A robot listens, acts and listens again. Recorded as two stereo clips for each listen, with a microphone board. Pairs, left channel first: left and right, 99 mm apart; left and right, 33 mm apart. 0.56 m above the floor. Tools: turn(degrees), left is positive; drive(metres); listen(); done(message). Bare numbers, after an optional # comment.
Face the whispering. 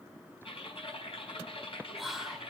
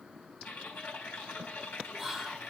turn(30)
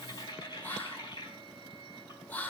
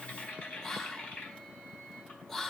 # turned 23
# So it is at 160° left.
turn(160)
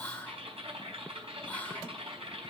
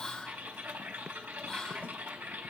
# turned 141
# The whispering is now 20° left.
turn(20)
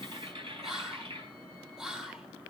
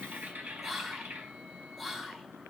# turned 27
# The whispering is now 10° right.
turn(-10)
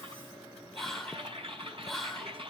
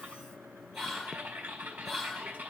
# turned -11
done("Found it: whispering, straight ahead.")